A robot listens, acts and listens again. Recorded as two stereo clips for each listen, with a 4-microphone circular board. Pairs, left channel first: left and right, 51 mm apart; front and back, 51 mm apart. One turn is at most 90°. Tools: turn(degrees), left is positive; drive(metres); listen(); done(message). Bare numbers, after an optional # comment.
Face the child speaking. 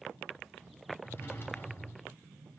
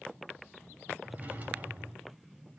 listen()
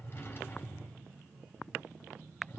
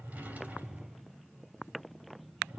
listen()
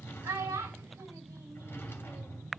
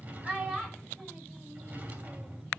# The child speaking: 105° right.
turn(-90)
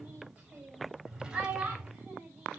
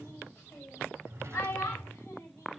# The child speaking is now 30° right.
turn(-30)
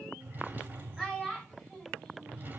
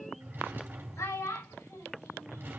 done("Facing the child speaking, over 4 m away.")